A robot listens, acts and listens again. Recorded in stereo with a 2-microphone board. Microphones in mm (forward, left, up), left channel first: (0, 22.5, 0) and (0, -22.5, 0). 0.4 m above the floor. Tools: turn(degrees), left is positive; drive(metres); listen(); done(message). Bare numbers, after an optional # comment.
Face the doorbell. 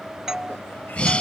turn(-30)
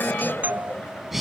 # So it is at 135° right.
turn(-135)
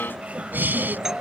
listen()
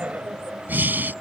listen()
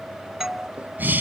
# The doorbell is now 10° right.
turn(-10)
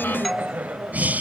done("Found it: a doorbell, straight ahead.")